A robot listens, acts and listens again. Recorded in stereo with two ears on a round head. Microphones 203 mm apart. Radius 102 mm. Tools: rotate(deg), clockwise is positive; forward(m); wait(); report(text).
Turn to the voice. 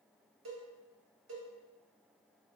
wait()
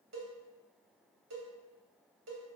wait()
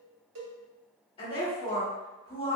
rotate(-25)
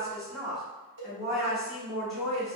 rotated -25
report("Facing the woman speaking, 2 to 4 m away.")